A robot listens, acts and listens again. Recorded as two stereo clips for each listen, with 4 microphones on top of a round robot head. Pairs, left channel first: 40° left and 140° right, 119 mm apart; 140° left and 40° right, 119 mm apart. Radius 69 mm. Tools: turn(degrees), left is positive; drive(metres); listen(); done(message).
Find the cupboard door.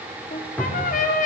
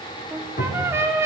turn(degrees=125)
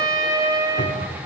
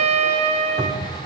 turn(degrees=20)
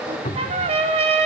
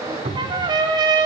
done("Facing the cupboard door, over 4 m away.")